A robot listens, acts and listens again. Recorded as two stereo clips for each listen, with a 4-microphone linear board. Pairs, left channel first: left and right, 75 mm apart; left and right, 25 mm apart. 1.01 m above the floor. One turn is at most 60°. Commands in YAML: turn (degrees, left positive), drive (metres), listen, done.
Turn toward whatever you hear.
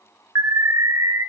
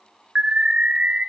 turn: -45
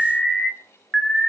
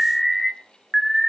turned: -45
done: "Found it: an alarm, straight ahead."